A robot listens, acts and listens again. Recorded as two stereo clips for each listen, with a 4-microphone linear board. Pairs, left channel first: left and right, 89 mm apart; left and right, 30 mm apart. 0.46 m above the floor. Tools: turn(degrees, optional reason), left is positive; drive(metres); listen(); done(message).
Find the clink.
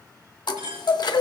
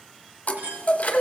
turn(degrees=-70, reason="The clink: about 70° right or 110° right.")
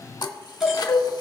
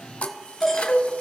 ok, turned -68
listen()
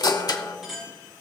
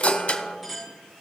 done("Facing the clink.")